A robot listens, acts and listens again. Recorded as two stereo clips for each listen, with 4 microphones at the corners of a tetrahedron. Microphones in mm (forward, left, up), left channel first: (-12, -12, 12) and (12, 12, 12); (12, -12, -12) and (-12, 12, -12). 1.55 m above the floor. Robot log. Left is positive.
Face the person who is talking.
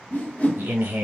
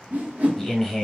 note: The man speaking: 35° left.
cmd yaw +35
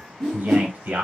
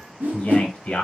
end: Facing the man speaking, under 1 m away.